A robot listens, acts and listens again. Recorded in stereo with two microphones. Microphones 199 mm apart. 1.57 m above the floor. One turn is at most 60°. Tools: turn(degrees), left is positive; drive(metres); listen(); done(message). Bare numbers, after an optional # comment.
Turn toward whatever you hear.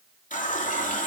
# The running tap: about 40° left or 140° left.
turn(40)
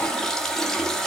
done("Found it: a running tap, straight ahead.")